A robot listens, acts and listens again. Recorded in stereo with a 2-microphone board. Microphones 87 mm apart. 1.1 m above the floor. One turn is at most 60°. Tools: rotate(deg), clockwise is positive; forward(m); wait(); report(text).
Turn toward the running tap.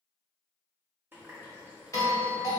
rotate(20)
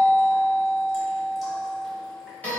wait()
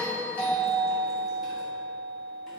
wait()
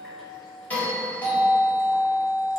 report("Facing the running tap.")